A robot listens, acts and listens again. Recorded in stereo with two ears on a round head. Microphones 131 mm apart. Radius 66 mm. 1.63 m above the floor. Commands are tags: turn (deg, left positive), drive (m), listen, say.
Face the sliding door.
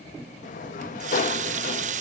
<turn deg="55"/>
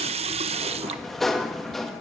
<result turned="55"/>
<say>Facing the sliding door, 1 to 2 m away.</say>